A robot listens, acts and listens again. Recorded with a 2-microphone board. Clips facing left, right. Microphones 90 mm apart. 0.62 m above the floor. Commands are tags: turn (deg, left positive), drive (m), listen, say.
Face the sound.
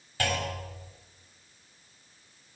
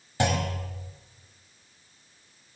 <turn deg="-20"/>
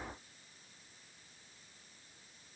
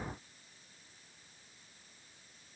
<listen/>
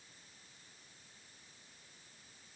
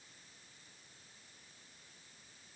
<say>I heard a clunk, but can't make it out now. It was about straight ahead or 140° right.</say>